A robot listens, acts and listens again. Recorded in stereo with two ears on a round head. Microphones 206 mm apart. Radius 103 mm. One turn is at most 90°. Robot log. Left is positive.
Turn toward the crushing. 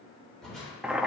cmd yaw +30
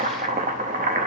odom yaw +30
cmd idle
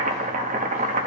cmd idle
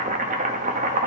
end: I heard crushing, but can't make it out now. It was about 30° right or 150° left.